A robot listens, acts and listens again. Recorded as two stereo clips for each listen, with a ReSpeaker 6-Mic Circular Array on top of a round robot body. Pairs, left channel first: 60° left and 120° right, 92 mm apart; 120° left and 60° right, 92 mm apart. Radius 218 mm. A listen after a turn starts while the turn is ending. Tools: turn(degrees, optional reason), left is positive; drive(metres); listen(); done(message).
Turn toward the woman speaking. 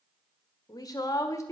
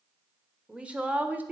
turn(degrees=10, reason="The woman speaking: 10° left.")
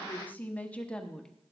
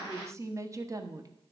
turn(degrees=-20, reason="The woman speaking is now 20° right.")
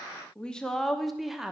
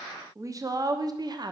turn(degrees=-40, reason="The woman speaking is now 40° right.")
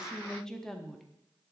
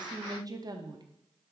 turn(degrees=-30, reason="The woman speaking is now 30° right.")
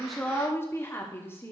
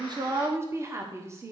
done("Facing the woman speaking, 1 to 2 m away.")